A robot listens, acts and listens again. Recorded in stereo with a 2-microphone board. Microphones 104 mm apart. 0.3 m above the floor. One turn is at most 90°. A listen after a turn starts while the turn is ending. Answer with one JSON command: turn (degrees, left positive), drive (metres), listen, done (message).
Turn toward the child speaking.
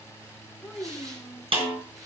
{"turn": 30}
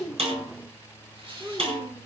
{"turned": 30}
{"turn": -25}
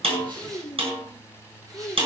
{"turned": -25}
{"turn": 10}
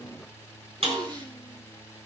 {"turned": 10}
{"listen": true}
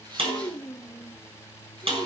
{"done": "Facing the child speaking."}